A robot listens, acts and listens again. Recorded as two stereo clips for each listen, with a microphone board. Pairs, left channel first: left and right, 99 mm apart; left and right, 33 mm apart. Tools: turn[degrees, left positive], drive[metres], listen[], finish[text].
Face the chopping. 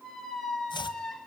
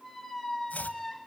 Thought: The chopping: about 55° left or 125° left.
Action: turn[55]
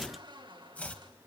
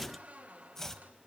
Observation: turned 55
Thought: So it is at 15° left.
Action: turn[15]
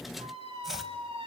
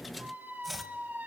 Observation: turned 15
Action: finish[Facing the chopping, 1 to 2 m away.]